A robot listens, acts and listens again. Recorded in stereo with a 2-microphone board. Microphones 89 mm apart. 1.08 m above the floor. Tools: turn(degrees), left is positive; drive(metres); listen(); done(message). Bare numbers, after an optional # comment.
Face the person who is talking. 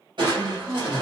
# The woman speaking: about 25° right or 155° right.
turn(-25)
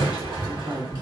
# So it is at 130° right.
turn(-130)
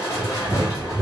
listen()
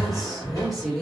done("Facing the woman speaking.")